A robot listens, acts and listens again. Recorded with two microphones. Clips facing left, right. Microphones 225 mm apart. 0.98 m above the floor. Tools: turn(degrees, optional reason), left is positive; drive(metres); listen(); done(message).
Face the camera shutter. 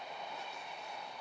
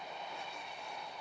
listen()
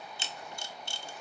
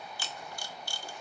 turn(degrees=20, reason="The camera shutter: about 20° left or 160° left.")
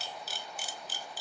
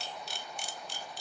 done("Found it: a camera shutter, straight ahead, 1 to 2 m away.")